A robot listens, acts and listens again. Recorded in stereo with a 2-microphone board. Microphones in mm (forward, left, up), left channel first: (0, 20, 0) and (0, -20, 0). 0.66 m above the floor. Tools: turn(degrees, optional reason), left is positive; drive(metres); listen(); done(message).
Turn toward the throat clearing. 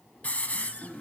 turn(degrees=30)
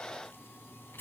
listen()
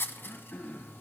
turn(degrees=145, reason="So it is at 145° left.")
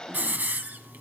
listen()
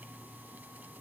listen()
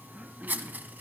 turn(degrees=-15, reason="The throat clearing is now 15° right.")
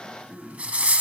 done("Found it: throat clearing, straight ahead.")